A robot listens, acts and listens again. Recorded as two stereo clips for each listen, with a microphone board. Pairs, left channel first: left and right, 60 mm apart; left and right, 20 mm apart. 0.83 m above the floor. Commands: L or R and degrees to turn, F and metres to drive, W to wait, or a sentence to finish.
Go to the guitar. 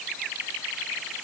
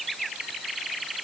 W
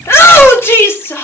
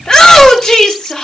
W
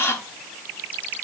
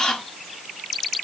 I can't make out a guitar, only a shout.